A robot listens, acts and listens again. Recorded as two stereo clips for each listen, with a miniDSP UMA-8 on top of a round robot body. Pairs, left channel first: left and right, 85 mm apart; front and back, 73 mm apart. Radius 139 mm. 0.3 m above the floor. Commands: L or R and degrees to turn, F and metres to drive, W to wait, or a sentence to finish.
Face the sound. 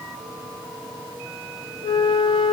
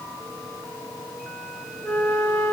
L65
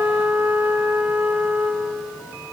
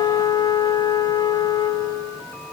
R20
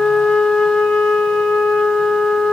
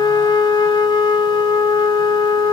Found it: a flute, straight ahead, 1 to 2 m away.